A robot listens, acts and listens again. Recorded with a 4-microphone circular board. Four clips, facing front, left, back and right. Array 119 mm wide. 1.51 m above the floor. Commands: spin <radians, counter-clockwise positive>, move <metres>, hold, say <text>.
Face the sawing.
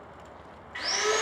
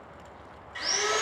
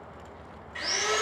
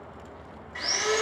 spin -0.44
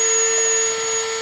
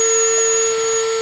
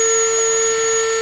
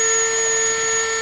say Facing the sawing.